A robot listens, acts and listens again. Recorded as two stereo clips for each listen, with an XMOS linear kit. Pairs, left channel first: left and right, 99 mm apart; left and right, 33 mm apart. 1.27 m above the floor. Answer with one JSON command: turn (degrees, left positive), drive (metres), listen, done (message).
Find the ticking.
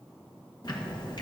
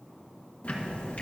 {"turn": 45}
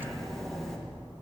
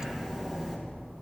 {"done": "Found it: ticking, straight ahead."}